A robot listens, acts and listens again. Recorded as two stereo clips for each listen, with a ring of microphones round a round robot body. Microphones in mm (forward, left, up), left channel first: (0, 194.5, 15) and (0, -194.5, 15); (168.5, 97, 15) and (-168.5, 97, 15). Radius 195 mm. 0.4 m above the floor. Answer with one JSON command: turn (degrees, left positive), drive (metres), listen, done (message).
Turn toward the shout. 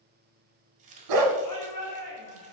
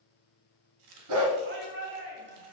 {"turn": 130}
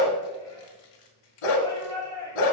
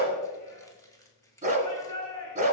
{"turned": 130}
{"turn": 10}
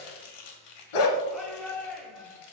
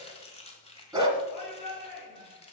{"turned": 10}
{"done": "Found it: a shout, straight ahead, 2 to 4 m away."}